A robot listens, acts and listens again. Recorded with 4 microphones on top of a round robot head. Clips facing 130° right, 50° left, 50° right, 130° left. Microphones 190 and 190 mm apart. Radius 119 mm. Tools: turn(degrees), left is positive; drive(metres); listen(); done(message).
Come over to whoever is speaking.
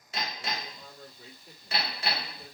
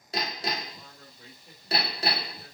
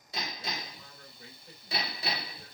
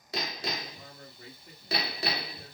turn(degrees=145)
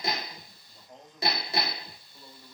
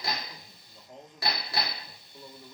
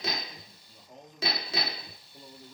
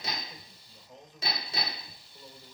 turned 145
turn(degrees=-20)
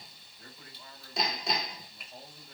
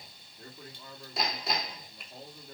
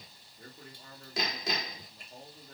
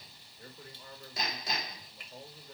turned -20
drive(metres=1.0)
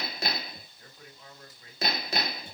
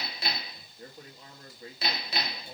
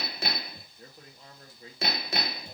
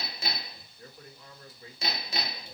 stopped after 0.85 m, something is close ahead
done("Arrived at the man speaking, straight ahead.")